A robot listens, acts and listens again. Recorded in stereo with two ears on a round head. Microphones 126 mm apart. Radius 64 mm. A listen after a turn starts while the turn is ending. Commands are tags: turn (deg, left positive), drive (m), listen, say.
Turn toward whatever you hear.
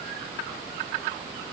<listen/>
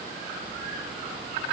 <listen/>
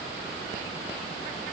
<say>I can't make out anything to turn to.</say>